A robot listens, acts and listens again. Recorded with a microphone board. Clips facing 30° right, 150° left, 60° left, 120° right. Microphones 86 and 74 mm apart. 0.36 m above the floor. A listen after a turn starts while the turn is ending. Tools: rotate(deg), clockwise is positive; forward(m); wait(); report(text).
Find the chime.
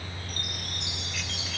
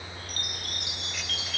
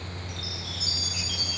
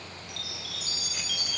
rotate(90)
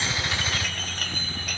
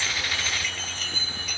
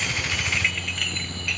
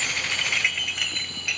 report("Facing the chime, 2 to 4 m away.")